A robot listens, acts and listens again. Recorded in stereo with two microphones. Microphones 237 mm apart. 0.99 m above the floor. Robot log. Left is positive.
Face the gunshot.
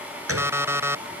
note: The gunshot: about 75° right or 105° right.
cmd yaw -75
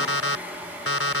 cmd idle
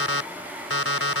end: I heard a gunshot, but can't make it out now. It was about straight ahead or 30° right.